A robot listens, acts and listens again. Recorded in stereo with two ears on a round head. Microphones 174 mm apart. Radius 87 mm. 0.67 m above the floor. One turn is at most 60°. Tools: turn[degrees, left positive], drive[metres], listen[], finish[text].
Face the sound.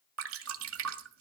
Action: turn[-60]
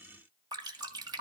Thought: So it is at 20° right.
Action: turn[-20]
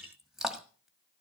Action: finish[Found it: dripping, straight ahead, 1 to 2 m away.]